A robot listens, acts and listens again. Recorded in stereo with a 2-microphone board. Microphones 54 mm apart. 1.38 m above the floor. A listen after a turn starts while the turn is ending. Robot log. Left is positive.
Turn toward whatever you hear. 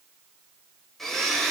cmd yaw +30
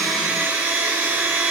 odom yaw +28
note: So it is at 25° right.
cmd yaw -25
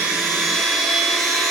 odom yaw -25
end: Found it: a blender, straight ahead.